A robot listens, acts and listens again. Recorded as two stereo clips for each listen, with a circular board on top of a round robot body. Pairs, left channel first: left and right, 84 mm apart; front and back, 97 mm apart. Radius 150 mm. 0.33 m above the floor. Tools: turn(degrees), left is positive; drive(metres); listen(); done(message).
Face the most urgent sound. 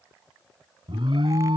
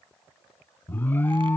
turn(degrees=-70)
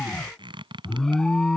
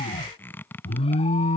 done("Facing the alarm.")